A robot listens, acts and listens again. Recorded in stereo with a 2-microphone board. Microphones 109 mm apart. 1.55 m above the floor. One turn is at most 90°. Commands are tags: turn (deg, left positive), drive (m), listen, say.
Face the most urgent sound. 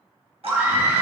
<turn deg="-15"/>
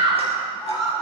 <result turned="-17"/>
<say>Facing the scream.</say>